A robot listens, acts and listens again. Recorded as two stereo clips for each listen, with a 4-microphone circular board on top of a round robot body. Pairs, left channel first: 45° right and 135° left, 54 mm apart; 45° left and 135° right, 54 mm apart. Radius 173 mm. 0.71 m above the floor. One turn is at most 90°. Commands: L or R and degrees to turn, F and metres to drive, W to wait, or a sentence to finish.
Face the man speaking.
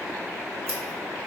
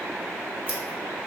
W
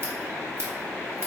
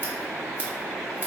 W
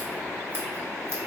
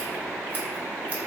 I can't make out a man speaking, only scissors.